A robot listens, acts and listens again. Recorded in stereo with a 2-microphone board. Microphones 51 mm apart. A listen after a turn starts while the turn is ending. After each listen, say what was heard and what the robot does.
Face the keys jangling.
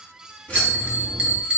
The keys jangling: about 30° left or 150° left. Turn 30° left.
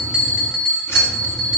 Keep listening.
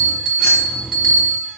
So it is at 110° left. Turn 110° left.
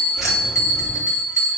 Keep listening.
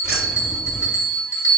The keys jangling is now 20° right. Turn 20° right.
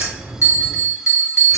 Facing the keys jangling, 2 to 4 m away.